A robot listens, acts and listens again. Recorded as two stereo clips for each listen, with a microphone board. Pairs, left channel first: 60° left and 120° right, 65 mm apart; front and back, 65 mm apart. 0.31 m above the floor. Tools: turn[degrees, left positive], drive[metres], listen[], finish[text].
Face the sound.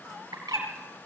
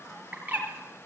Thought: The bird: 110° right.
Action: turn[-110]
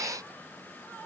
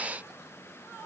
Action: listen[]
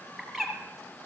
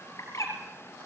Thought: The bird is now 35° right.
Action: turn[-35]
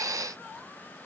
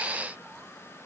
Action: listen[]
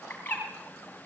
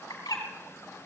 Action: finish[Facing the bird.]